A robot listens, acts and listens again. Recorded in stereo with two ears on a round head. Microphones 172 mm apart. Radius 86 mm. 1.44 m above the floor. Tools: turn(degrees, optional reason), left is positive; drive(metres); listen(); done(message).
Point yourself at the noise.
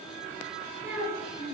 turn(degrees=-15, reason="The child speaking: about 15° right or 165° right.")
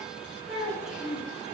turn(degrees=30)
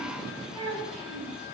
turn(degrees=-35, reason="So it is at 35° right.")
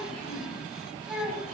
done("Facing the child speaking, over 4 m away.")